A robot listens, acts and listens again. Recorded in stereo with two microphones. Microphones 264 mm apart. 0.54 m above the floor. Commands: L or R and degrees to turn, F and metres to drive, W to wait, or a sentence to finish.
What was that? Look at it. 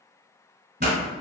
R40
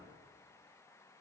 W
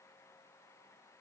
I heard a pop, but can't make it out now. It was about straight ahead or 100° right.